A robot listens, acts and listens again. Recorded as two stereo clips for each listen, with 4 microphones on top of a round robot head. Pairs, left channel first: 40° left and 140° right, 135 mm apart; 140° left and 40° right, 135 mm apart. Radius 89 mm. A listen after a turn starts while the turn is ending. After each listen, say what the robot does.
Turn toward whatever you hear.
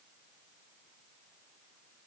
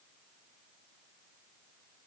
Keep listening.
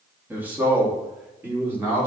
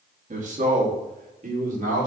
Turn 65° right.
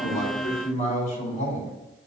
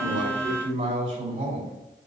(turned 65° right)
Facing the man speaking.